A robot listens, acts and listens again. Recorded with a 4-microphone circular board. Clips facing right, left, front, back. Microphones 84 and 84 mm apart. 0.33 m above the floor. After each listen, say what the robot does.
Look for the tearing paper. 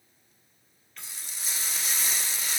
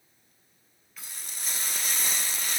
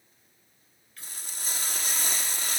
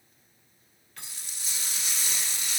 Keep listening.
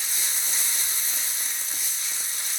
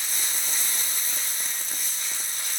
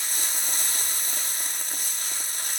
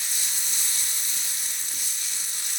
Keep listening.
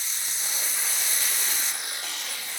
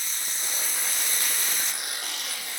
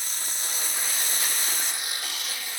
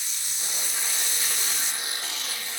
Turn 115° left.
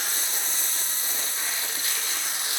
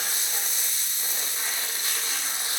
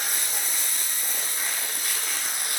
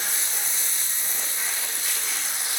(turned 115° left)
Keep listening.
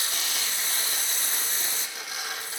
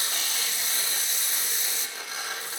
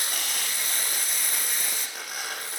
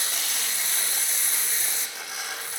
Turn 30° left.
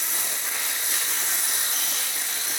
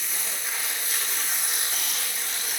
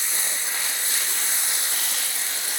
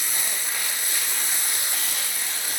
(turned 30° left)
Keep listening.
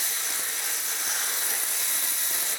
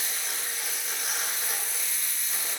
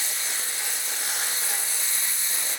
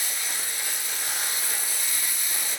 Keep listening.
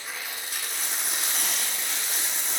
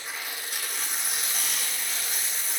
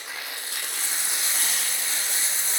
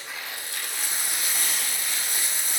Facing the tearing paper.